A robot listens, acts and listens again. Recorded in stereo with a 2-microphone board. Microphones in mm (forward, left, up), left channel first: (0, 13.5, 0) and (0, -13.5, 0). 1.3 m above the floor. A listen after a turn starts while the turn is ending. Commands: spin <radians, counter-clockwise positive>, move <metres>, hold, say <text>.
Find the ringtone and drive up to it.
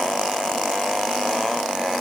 hold
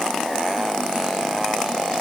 hold
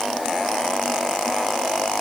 say I can't make out a ringtone to turn to.